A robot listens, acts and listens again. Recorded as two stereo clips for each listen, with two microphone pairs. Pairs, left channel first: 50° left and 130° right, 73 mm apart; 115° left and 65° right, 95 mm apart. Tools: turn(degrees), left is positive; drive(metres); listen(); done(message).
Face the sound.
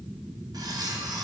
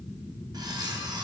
turn(degrees=-110)
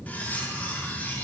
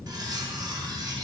turn(degrees=-20)
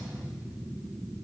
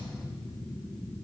listen()
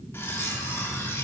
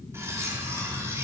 done("Found it: cutlery clinking, straight ahead.")